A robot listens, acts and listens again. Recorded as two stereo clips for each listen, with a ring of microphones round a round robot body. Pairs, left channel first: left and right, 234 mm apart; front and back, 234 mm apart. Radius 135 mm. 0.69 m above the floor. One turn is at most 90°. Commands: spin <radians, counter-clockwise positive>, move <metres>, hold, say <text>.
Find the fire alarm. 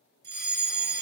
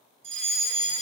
spin -1.57
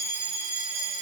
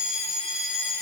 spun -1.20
spin -1.22
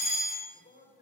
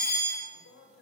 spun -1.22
say Found it: a fire alarm, straight ahead.